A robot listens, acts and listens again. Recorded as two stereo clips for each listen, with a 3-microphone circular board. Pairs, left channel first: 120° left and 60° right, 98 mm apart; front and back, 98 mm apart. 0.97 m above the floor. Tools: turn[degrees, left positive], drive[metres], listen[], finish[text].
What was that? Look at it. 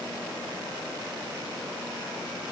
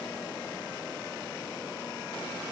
Action: listen[]
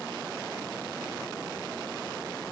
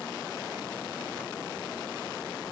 Action: listen[]
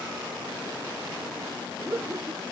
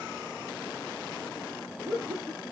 Thought: The laughter: 130° right.
Action: turn[-130]
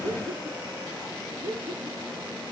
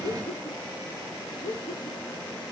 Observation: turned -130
Action: finish[Found it: laughter, straight ahead.]